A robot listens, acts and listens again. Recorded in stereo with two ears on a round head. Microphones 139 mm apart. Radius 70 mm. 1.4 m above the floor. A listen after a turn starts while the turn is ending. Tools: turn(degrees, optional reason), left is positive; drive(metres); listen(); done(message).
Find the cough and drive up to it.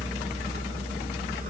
listen()
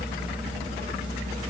listen()
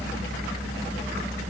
done("I can't make out a cough.")